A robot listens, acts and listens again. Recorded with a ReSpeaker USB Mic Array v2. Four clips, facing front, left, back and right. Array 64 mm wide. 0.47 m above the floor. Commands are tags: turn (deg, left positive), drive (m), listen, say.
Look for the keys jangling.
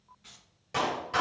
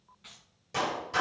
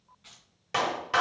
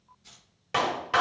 <turn deg="95"/>
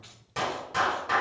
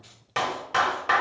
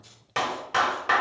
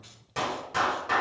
<say>Found it: keys jangling, straight ahead, 2 to 4 m away.</say>